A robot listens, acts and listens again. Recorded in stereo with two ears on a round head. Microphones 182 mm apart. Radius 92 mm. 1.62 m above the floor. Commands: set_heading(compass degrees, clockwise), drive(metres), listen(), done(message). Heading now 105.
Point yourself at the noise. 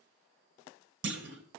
set_heading(165)
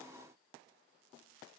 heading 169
listen()
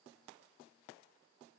done("I heard a clunk, but can't make it out now. It was about straight ahead or 55° right.")